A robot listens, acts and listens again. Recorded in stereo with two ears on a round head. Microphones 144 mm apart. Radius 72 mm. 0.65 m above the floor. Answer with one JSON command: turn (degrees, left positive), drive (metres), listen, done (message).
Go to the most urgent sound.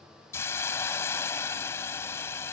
{"listen": true}
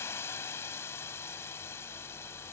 {"listen": true}
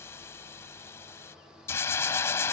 {"done": "I can't make out anything urgent, only a hiss."}